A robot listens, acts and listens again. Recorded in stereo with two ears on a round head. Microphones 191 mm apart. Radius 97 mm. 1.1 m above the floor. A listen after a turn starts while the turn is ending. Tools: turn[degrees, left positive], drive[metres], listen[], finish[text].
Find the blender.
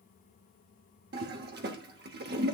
Action: listen[]
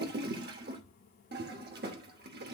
Action: listen[]
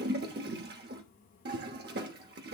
Action: finish[I can't make out a blender, only a toilet flushing.]